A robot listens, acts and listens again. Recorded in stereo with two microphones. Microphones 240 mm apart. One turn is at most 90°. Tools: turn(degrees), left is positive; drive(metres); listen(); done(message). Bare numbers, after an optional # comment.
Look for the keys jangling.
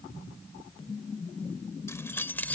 turn(30)
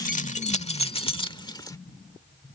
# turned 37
# So it is at 160° left.
turn(90)
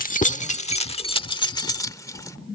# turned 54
# The keys jangling is now 165° left.
turn(90)
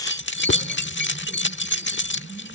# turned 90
# The keys jangling is now 50° left.
turn(50)
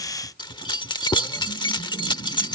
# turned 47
# The keys jangling is now 20° left.
turn(20)
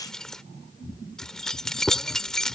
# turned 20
done("Facing the keys jangling.")